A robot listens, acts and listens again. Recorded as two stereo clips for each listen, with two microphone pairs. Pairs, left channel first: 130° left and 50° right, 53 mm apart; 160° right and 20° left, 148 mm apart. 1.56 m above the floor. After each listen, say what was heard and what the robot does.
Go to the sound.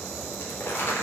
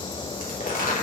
The crumpling: straight behind. Turn 180° left.
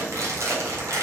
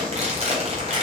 The crumpling is now 25° right. Turn 25° right.
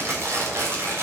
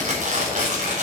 The crumpling is now 10° right. Turn 10° right.
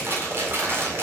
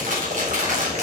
Drive 1.0 m forward.
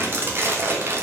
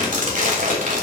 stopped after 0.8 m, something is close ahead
Blocked. The crumpling is further on, straight ahead.